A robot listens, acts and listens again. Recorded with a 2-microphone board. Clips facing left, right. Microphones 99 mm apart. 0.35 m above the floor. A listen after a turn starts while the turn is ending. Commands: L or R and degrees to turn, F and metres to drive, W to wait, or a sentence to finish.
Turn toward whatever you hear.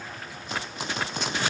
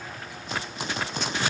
W
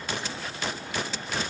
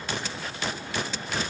W
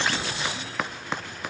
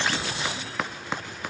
I can't make out anything to turn to.